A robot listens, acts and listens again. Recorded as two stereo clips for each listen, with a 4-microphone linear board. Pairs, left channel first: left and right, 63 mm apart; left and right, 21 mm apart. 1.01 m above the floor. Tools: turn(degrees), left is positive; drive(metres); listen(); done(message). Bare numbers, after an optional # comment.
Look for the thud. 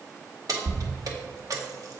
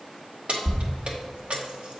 # The thud: about 30° left or 150° left.
turn(30)
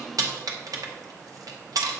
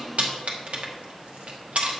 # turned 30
listen()
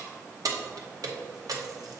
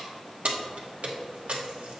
done("I heard a thud, but can't make it out now. It was about straight ahead or 120° left.")